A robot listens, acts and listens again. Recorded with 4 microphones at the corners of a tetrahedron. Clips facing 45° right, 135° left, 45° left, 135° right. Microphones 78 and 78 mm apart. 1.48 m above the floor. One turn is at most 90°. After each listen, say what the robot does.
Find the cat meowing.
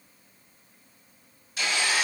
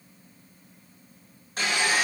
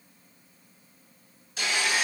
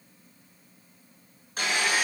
Keep listening.
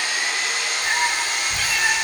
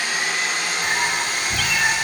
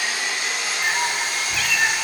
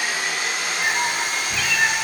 Turn 90° left.
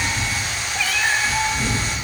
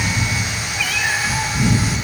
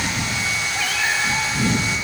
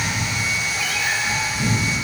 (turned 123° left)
Turn 40° left.
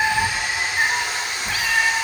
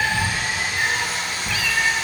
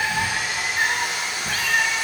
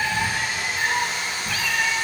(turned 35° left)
Found it: a cat meowing, straight ahead, 2 to 4 m away.